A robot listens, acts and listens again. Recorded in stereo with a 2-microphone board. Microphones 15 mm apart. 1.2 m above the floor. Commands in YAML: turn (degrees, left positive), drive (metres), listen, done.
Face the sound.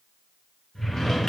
turn: 40
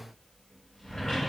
turn: 85
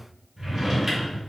turn: -30
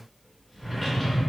turn: 10
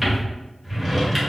done: "Facing the drawer."